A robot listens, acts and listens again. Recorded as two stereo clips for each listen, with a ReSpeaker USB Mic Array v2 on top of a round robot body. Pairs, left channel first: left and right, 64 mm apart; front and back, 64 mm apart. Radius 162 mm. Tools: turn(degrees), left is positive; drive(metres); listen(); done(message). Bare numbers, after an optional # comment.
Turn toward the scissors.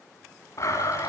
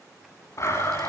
listen()
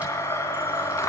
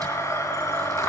listen()
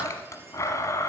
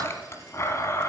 done("I can't make out scissors, only a blender.")